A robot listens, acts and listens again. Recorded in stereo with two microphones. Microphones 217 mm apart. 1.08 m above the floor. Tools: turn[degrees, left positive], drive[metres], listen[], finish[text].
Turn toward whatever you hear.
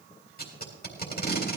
Thought: The tape being pulled: about 45° left or 135° left.
Action: turn[45]
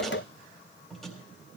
Action: finish[Found it: tape being pulled, straight ahead, 2 to 4 m away.]